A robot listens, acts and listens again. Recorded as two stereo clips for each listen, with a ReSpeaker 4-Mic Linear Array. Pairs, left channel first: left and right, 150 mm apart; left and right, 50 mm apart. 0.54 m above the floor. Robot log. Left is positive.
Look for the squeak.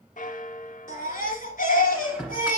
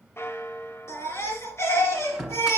cmd yaw -30
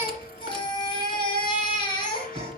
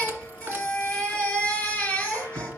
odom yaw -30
cmd idle
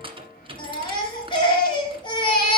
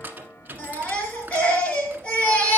note: So it is at 145° right.
cmd yaw -145
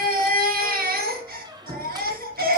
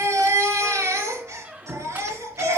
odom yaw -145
note: The squeak is now 30° right.
cmd yaw -30
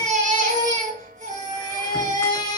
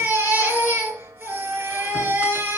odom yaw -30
cmd idle
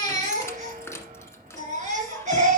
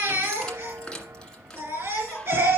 note: The squeak is now 15° left.
cmd yaw +15
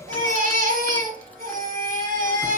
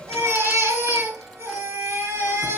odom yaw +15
cmd idle
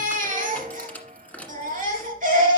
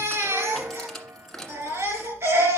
note: The squeak is now 10° left.
cmd yaw +10
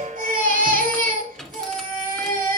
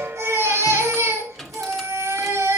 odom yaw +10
end: Found it: a squeak, straight ahead, 1 to 2 m away.